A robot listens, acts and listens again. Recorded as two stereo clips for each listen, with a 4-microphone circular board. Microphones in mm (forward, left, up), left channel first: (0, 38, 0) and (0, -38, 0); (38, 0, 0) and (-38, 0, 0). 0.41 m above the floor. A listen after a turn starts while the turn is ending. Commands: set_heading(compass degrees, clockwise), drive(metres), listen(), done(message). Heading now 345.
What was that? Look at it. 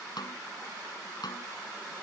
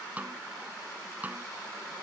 set_heading(230)
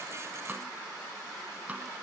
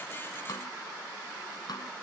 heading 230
listen()
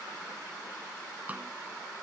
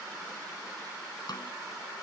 set_heading(255)
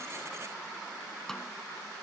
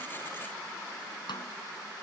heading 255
done("Facing the snare drum.")